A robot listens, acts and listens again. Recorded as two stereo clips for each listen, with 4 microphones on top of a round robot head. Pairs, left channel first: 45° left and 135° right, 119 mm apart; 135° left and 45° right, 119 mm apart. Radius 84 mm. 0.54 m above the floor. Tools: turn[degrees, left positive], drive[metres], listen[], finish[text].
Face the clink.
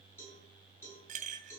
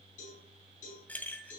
Thought: The clink: 150° right.
Action: turn[-150]
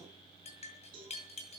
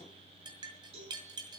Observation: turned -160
Thought: The clink is now 10° left.
Action: turn[10]
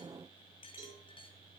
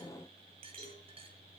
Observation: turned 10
Action: finish[Found it: a clink, straight ahead.]